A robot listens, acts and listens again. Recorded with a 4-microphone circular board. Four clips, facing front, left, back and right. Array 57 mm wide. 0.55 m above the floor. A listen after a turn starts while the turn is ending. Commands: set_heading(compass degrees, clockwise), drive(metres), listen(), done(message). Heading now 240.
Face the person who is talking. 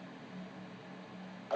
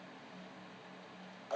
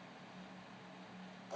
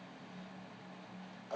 listen()
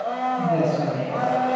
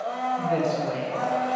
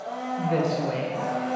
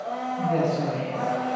set_heading(85)
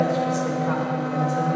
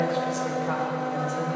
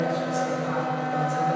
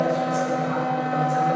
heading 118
set_heading(83)
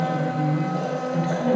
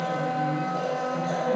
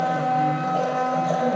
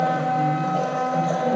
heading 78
set_heading(88)
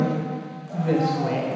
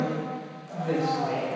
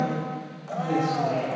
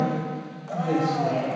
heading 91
done("Facing the woman speaking.")